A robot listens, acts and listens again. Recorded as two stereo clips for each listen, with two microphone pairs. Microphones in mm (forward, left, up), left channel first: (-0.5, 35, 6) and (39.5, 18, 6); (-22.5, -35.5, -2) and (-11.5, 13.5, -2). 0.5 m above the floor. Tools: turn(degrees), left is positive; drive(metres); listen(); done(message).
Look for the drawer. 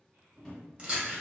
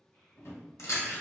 turn(degrees=-130)
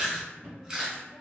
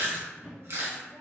turn(degrees=10)
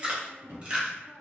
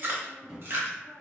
done("Found it: a drawer, straight ahead.")